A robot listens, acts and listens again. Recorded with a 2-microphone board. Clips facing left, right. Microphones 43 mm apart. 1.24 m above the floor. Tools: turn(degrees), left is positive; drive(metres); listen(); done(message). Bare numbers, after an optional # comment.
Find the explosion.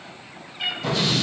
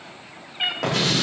turn(-90)
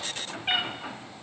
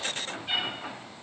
done("Facing where the explosion came from. I can't hear it now.")